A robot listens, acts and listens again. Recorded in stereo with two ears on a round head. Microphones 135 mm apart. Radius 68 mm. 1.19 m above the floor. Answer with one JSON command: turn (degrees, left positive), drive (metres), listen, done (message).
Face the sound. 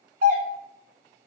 {"turn": -55}
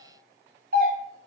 {"turn": -60}
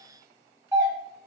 {"turn": -15}
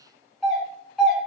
{"done": "Found it: a doorbell, straight ahead, 1 to 2 m away."}